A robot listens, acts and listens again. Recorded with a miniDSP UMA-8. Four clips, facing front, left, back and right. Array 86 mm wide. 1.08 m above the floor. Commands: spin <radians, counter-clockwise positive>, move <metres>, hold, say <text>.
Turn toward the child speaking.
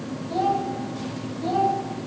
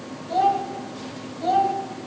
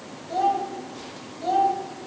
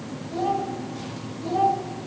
spin 1.92
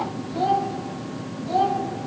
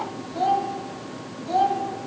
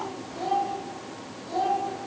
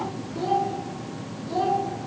spin 0.96
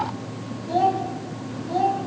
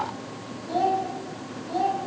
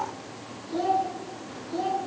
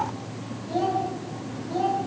spin 0.26
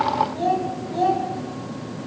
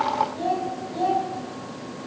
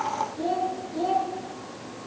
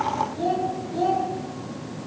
spin 0.17
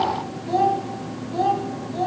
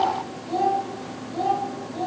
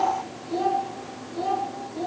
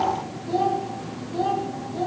say Found it: a child speaking, straight ahead, over 4 m away.